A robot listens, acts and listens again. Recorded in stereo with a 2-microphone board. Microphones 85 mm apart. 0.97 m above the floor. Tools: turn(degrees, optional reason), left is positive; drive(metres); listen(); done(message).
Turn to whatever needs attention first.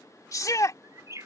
turn(degrees=45, reason="The shout: about 45° left or 135° left.")
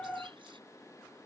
listen()
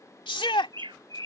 turn(degrees=90, reason="So it is at 90° left.")
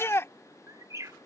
turn(degrees=30, reason="The shout is now 30° left.")
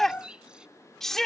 done("Found it: a shout, straight ahead.")